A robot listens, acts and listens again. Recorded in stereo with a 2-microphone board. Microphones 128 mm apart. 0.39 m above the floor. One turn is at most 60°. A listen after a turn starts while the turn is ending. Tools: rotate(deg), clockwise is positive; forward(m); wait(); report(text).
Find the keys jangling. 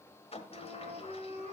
wait()
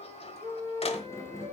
rotate(-20)
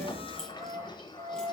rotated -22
report("Facing the keys jangling, over 4 m away.")